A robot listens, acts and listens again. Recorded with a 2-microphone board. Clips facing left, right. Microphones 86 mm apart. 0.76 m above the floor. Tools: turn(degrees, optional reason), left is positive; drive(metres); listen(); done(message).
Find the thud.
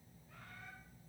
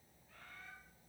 listen()
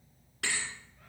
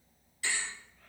turn(degrees=65, reason="The thud: about 65° left or 115° left.")
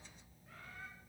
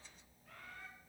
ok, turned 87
listen()
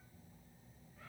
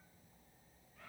done("I heard a thud, but can't make it out now. It was about 20° right or 25° left.")